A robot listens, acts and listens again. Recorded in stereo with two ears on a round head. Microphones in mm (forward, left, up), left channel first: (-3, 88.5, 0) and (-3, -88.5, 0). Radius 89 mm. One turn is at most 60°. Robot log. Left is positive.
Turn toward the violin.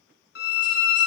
note: The violin: about 55° left or 125° left.
cmd yaw +55
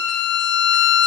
note: So it is at 65° left.
cmd yaw +60
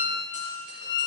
note: The violin is now 20° left.
cmd yaw +20
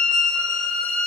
end: Facing the violin.